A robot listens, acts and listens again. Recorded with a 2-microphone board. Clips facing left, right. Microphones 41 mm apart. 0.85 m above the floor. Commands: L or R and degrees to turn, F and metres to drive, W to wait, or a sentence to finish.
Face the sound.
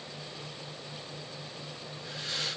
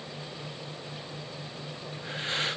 R35
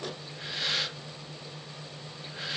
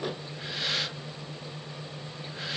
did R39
Facing the breathing.